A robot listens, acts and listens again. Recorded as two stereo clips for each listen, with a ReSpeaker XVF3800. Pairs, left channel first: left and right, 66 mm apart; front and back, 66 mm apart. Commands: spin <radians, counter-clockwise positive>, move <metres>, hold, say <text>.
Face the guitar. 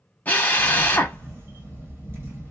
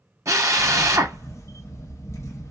hold
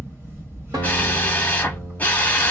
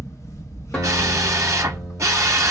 spin -1.48
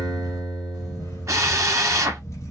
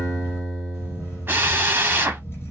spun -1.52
say Found it: a guitar, straight ahead.